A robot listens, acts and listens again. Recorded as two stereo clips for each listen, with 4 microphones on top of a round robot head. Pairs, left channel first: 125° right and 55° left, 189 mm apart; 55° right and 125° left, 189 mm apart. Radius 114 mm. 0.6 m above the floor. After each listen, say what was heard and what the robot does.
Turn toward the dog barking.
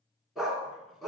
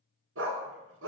The dog barking: 145° left. Turn 145° left.
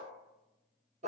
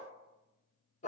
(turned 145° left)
Found it: a dog barking, straight ahead, 2 to 4 m away.